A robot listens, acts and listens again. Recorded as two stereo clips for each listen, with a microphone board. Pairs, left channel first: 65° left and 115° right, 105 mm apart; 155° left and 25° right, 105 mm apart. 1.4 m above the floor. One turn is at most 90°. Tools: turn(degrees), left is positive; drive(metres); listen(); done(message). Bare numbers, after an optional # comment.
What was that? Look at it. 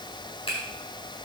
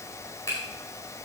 # The finger snap: 100° left.
turn(90)
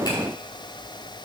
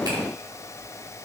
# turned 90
# Nothing new. It was at 10° left.
turn(10)
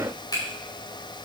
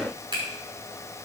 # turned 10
# The finger snap is now 20° left.
turn(20)
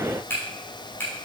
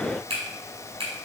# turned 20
done("Found it: a finger snap, straight ahead.")